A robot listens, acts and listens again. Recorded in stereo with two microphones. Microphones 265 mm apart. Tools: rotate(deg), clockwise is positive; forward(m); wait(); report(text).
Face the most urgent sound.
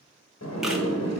wait()
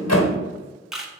wait()
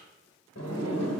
report("I can't make out anything urgent to turn to.")